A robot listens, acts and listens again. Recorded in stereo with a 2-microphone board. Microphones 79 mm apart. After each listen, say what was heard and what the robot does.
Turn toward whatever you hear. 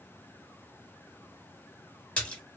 The splash: about 15° left or 165° left. Turn 15° left.
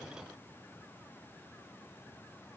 Keep listening.
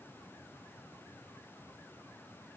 I heard a splash, but can't make it out now. It was about straight ahead or 150° left.